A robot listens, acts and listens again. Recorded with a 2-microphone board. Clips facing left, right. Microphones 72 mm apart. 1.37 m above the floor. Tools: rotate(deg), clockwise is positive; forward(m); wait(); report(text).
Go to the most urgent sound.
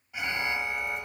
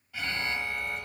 rotate(-20)
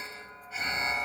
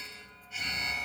rotate(-145)
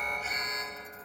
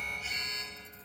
rotate(-40)
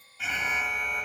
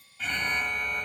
forward(1.0)
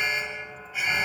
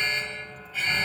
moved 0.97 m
rotate(-10)
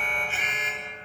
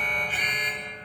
forward(1.0)
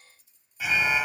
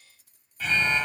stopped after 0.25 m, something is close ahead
rotate(-10)
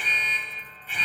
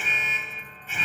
report("I am next to the alarm.")